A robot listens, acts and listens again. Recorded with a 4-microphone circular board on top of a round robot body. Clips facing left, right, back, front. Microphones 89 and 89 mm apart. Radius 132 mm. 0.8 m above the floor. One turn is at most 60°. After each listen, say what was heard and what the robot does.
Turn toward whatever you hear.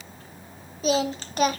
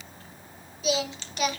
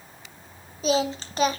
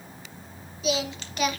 The singing: 130° left. Turn 60° left.
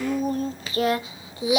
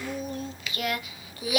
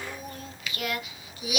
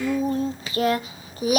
The singing is now 25° left. Turn 25° left.
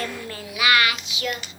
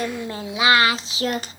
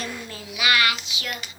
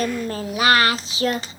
The singing is now 50° right. Turn 50° right.
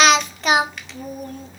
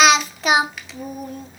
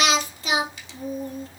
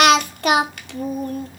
Found it: singing, straight ahead, 1 to 2 m away.